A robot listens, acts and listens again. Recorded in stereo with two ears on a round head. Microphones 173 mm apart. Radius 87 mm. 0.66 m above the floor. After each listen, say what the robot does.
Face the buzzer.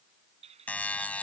Turn 30° left.
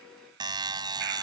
Turn 20° right.
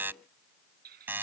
Turn 10° right.
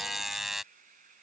Facing the buzzer.